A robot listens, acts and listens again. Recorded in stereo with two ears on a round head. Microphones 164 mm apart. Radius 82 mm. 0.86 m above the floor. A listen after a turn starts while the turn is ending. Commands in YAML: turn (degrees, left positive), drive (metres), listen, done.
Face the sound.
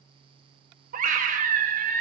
turn: -45
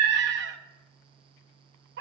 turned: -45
turn: -80
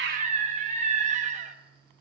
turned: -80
turn: -45
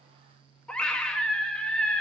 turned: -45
done: "Facing the scream, under 1 m away."